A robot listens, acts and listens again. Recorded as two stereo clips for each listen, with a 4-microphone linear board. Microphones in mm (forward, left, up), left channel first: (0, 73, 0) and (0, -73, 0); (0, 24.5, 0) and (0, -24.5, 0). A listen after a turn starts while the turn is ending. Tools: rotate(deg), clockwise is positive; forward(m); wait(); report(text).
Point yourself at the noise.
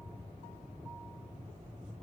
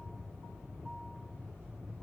wait()
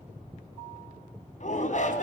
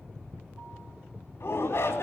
rotate(-60)
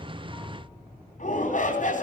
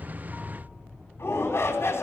rotate(-60)
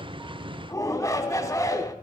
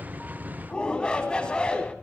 rotate(-20)
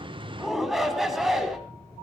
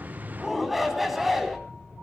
report("Facing the shout.")